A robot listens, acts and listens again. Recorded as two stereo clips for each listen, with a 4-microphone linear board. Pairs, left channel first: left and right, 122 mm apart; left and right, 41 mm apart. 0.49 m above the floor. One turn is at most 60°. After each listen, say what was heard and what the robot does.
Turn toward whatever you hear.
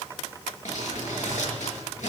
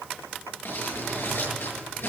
Turn 60° left.
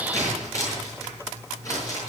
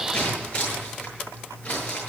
So it is at 25° left. Turn 25° left.
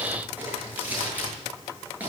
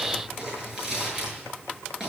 The crumpling is now 15° right. Turn 15° right.
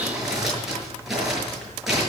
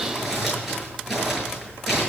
Found it: crumpling, straight ahead, over 4 m away.